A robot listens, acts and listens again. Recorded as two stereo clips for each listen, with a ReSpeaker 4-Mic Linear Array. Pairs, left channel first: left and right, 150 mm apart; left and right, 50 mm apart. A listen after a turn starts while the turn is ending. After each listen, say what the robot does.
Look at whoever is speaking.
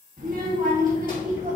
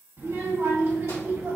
Turn 60° right.
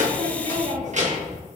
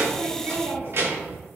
Turn 55° right.
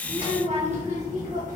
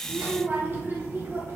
Turn 60° right.
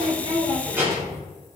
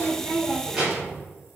Turn 20° right.
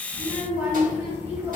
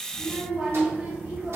Turn 15° right.
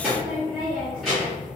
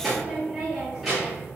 Found it: a child speaking, straight ahead, 2 to 4 m away.